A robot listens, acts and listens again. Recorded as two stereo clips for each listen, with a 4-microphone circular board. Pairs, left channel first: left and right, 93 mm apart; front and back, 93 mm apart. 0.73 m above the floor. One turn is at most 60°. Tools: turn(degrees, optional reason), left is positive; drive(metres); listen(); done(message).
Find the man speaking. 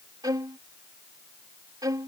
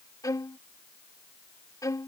listen()
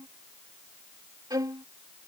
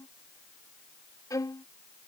listen()
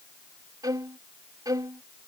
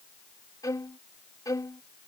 done("I can't make out a man speaking to turn to.")